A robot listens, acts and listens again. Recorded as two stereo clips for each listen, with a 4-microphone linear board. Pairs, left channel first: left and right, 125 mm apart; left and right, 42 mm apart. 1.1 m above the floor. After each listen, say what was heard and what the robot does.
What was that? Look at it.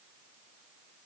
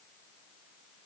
Keep listening.
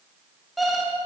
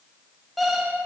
Turn 30° left.
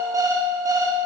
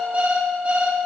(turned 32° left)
So it is at 35° right. Turn 35° right.
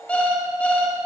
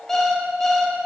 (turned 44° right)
The alarm clock is now 10° left. Turn 10° left.
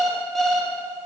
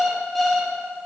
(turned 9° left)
Found it: an alarm clock, straight ahead.